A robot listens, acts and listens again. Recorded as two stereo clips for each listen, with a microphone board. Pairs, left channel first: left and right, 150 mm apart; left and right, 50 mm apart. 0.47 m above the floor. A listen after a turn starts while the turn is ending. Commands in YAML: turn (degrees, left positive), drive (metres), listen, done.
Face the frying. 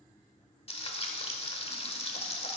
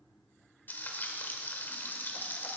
turn: 40
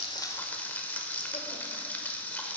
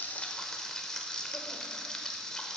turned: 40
turn: 15
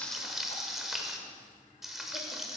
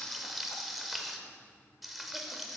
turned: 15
done: "Facing the frying, 1 to 2 m away."